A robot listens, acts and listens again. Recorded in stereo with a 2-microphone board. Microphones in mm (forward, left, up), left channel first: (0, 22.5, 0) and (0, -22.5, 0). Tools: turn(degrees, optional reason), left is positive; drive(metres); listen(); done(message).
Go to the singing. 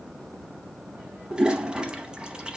listen()
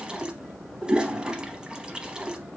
listen()
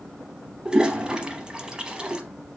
done("I can't make out singing to turn to.")